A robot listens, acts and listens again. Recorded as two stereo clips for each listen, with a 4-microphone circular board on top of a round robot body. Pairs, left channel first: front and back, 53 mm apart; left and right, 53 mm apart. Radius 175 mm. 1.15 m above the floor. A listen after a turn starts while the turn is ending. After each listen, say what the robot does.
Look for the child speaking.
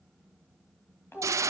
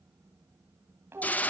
Turn 45° right.
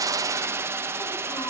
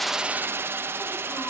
Keep listening.
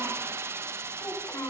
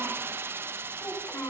Turn 35° left.
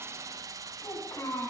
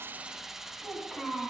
Facing the child speaking.